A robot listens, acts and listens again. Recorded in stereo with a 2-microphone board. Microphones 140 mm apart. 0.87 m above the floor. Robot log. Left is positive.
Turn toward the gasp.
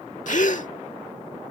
note: The gasp: about 65° left or 115° left.
cmd yaw +65
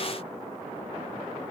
cmd idle
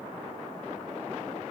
end: I heard a gasp, but can't make it out now. It was about straight ahead or 50° left.